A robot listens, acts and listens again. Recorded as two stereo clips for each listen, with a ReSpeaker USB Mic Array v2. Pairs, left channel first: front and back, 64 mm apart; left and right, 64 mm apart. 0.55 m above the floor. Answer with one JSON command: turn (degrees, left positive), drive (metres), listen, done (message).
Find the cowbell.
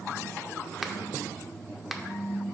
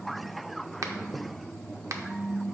{"listen": true}
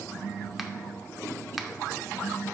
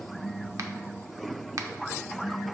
{"listen": true}
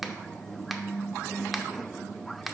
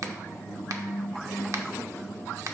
{"done": "I can't make out a cowbell, only a finger snap."}